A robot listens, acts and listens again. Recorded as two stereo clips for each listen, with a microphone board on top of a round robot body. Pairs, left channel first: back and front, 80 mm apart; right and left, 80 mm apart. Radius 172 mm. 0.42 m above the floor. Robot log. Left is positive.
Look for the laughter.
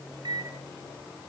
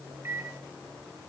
cmd idle
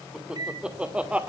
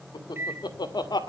note: The laughter: 70° right.
cmd yaw -70
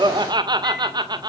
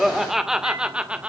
note: The laughter is now 15° left.
cmd yaw +15
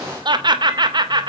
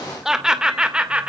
note: The laughter is now 15° left.
cmd yaw +15
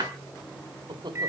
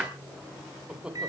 note: The laughter is now 10° left.
cmd yaw +10
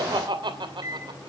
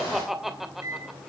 end: Found it: laughter, straight ahead.